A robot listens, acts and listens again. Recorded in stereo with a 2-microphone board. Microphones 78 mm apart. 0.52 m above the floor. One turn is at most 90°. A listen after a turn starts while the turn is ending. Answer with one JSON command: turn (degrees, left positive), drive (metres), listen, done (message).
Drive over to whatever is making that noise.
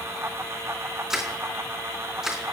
{"turn": -30}
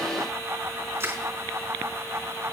{"turn": -90}
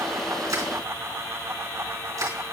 {"turn": -45}
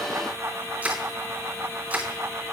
{"turn": -20}
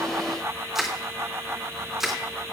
{"drive": 1.0}
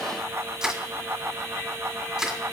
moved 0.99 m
{"drive": 1.0}
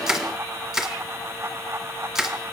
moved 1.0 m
{"drive": 1.0}
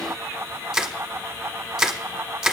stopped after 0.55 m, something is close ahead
{"done": "Arrived at the crushing, straight ahead."}